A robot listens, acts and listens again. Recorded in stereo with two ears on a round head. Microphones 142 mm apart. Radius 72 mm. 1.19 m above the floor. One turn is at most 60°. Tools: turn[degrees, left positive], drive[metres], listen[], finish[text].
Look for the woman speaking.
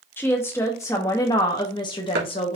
Thought: The woman speaking: about 40° left or 140° left.
Action: turn[40]
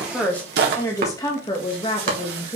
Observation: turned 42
Thought: The woman speaking: about 40° left or 140° left.
Action: turn[40]
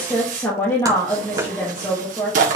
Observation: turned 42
Thought: So it is at 20° left.
Action: turn[20]
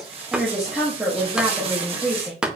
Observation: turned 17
Action: finish[Facing the woman speaking.]